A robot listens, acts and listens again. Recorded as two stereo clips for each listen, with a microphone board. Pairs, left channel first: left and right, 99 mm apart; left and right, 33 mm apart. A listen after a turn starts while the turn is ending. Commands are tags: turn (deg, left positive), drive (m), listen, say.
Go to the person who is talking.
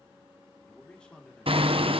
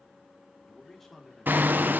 <turn deg="30"/>
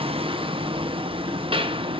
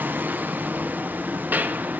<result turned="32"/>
<listen/>
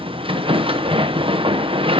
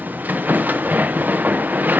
<listen/>
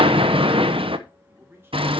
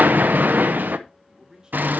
<turn deg="-25"/>
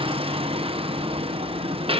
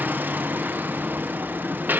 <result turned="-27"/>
<listen/>
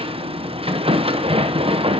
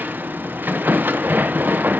<listen/>
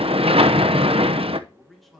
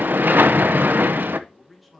<drive m="1.0"/>
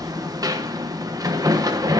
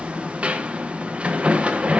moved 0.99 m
<listen/>
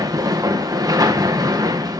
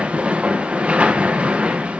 <listen/>
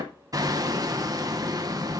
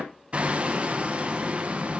<say>Facing where the man speaking came from. I can't hear it now. I did not reach it.</say>